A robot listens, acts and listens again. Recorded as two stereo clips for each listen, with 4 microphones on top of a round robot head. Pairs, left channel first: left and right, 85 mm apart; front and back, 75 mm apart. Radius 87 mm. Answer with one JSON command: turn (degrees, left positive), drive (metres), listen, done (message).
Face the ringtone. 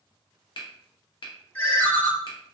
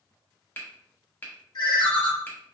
{"turn": 20}
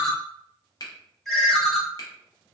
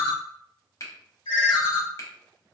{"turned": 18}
{"done": "Found it: a ringtone, straight ahead, 1 to 2 m away."}